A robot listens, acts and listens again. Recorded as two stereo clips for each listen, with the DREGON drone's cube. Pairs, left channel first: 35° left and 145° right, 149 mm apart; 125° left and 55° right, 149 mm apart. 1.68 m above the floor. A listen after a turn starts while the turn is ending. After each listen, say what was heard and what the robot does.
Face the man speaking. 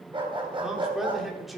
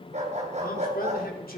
The man speaking: 125° left. Turn 125° left.
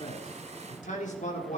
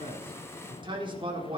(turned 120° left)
Found it: a man speaking, straight ahead.